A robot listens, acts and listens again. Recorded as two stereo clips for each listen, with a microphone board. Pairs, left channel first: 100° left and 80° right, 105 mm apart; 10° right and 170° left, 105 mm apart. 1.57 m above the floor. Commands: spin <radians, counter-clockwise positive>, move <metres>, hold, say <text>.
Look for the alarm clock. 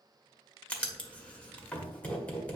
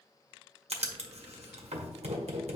hold
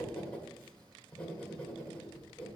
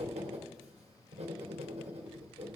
hold
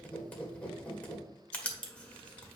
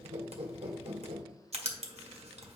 say I can't make out an alarm clock, only writing.